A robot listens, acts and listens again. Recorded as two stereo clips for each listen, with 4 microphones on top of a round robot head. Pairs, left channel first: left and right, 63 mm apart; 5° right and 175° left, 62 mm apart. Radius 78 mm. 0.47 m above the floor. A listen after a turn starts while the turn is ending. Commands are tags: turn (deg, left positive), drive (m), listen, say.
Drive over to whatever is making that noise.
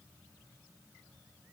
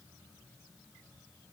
<listen/>
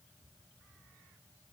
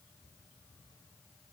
<listen/>
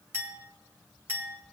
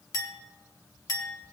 <turn deg="-35"/>
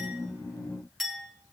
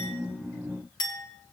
<drive m="1.0"/>
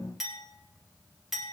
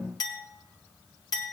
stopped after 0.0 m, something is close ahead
<say>Something is in my way. I am facing the clink but have not reached it.</say>